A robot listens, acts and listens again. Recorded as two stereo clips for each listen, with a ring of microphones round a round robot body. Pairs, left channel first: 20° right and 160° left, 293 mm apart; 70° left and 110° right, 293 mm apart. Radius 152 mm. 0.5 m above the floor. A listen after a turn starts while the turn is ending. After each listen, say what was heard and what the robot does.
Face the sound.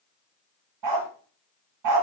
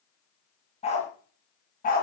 The dog barking: 130° left. Turn 130° left.
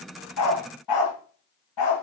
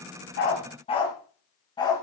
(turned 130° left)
The dog barking is now 10° right. Turn 10° right.
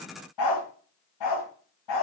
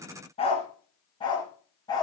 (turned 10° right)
The dog barking is now 10° right. Turn 10° right.
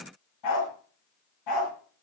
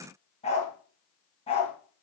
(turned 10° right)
Facing the dog barking, 2 to 4 m away.